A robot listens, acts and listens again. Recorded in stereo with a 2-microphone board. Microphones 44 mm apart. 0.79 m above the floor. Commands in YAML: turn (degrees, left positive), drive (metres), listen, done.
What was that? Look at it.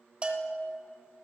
turn: -25
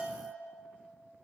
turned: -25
turn: -125
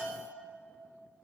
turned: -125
turn: -25
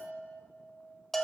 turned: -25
turn: 10
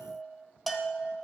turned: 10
done: "Facing the bell."